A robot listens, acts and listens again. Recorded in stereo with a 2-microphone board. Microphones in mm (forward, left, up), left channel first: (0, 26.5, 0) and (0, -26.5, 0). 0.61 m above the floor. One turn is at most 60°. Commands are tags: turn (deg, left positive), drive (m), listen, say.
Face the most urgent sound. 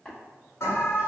<turn deg="55"/>
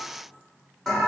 <say>Facing the alarm.</say>